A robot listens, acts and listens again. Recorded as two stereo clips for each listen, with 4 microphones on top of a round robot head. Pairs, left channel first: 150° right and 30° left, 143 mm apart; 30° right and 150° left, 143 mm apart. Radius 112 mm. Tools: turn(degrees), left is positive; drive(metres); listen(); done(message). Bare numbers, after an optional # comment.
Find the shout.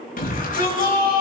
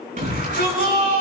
# The shout: straight behind.
turn(180)
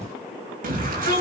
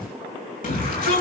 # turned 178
done("Found it: a shout, straight ahead, over 4 m away.")